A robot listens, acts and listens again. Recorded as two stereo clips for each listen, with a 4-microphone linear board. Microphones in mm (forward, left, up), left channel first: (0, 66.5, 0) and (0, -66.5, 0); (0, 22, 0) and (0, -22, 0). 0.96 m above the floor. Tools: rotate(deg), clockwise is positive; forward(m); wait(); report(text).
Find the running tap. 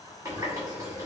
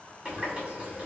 rotate(20)
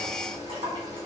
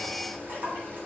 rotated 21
rotate(140)
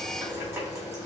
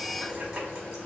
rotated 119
rotate(20)
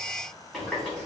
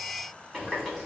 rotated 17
report("Facing the running tap.")